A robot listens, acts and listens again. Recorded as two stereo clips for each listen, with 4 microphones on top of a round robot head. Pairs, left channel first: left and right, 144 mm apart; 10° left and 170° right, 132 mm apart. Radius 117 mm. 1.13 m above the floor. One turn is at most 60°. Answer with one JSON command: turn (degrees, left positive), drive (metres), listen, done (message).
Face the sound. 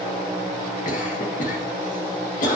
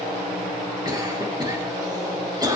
{"turn": 60}
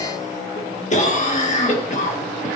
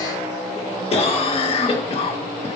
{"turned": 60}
{"turn": 55}
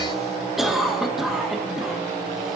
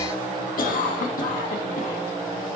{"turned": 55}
{"done": "Found it: a cough, straight ahead."}